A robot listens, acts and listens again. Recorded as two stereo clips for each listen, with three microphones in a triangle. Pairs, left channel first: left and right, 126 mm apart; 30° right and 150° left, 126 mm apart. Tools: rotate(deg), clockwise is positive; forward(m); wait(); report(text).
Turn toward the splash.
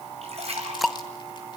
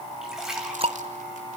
rotate(125)
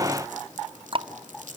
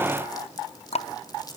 report("I heard a splash from this way, but can't make it out now.")